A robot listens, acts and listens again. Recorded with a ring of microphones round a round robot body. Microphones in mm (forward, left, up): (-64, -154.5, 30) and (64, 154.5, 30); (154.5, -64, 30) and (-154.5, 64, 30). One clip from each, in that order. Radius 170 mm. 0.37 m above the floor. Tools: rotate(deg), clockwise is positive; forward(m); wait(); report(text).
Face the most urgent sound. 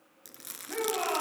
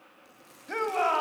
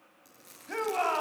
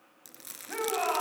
rotate(-45)
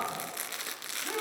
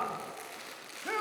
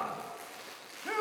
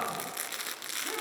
rotate(-20)
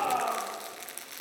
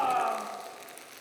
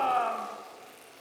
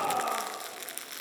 report("Found it: a shout, straight ahead.")